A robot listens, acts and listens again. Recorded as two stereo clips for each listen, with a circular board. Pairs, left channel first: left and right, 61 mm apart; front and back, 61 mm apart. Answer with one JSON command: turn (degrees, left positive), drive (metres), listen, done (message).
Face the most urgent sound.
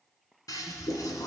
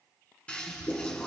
{"listen": true}
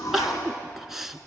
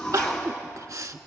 {"turn": -175}
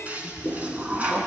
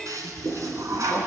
{"listen": true}
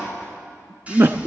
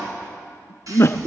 {"turn": -45}
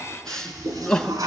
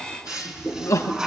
{"turn": 10}
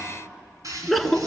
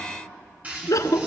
{"done": "Found it: crying, straight ahead, under 1 m away."}